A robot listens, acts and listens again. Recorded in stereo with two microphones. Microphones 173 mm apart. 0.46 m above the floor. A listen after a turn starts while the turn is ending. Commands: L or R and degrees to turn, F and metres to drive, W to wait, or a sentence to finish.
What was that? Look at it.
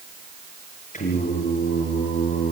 L50
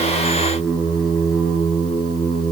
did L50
Found it: singing, straight ahead.